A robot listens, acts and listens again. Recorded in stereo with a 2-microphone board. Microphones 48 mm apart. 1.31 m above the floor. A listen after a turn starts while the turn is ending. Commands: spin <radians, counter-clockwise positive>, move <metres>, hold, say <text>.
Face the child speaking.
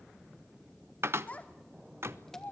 spin 0.70
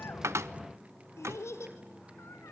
spin 1.66
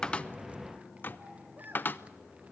hold
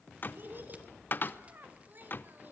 spin -0.70
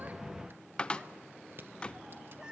hold
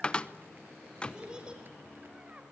spin -0.35
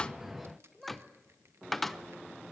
say Facing the child speaking, over 4 m away.